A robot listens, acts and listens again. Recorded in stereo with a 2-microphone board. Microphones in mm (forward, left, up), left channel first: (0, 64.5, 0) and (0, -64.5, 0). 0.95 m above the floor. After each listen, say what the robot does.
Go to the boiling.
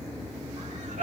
Keep listening.
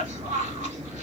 Keep listening.
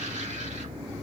I can't make out boiling, only a cough.